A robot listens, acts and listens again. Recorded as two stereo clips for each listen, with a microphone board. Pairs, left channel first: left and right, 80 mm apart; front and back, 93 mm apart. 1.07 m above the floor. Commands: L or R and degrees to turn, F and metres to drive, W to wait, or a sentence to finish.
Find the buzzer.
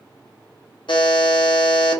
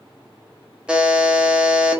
L100
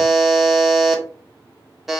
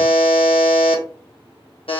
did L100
Found it: a buzzer, straight ahead.